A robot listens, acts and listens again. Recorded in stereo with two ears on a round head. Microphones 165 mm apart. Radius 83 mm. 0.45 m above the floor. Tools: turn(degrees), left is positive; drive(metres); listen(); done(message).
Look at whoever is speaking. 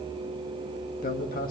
turn(degrees=50)
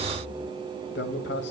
turn(degrees=75)
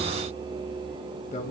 turn(degrees=45)
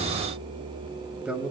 done("Facing the man speaking, 1 to 2 m away.")